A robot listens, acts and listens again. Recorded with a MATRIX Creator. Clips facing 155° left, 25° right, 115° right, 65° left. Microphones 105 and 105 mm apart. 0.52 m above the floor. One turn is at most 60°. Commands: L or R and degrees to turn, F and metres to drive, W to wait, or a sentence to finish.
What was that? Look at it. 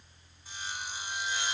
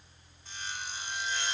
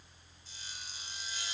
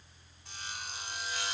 L60
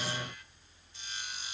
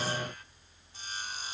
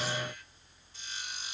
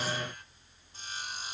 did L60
L25
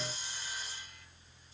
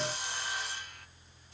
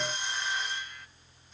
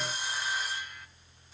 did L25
R15
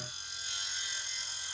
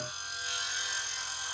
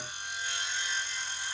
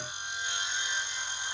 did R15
Facing the sawing.